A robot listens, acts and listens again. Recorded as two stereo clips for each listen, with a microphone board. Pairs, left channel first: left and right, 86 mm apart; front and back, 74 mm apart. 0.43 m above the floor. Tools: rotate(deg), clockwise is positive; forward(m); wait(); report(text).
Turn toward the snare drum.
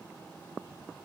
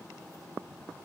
wait()
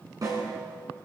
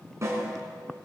rotate(130)
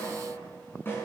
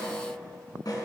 rotate(-30)
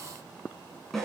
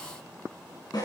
report("Found it: a snare drum, straight ahead.")